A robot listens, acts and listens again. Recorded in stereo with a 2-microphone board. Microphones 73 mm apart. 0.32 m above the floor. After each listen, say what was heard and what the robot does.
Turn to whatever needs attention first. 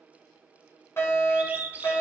The fire alarm: about 35° left or 145° left. Turn 35° left.
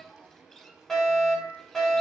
Facing the fire alarm.